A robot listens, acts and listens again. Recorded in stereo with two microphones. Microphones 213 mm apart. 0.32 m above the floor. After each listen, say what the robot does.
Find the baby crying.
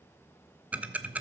Keep listening.
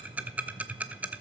Keep listening.
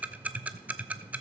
I can't make out a baby crying, only ticking.